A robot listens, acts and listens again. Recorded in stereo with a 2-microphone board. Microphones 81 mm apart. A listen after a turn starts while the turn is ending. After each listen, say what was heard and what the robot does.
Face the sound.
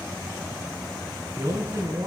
The man speaking: about 45° right or 135° right. Turn 45° right.
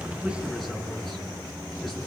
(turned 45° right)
Keep listening.
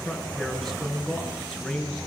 Facing the man speaking.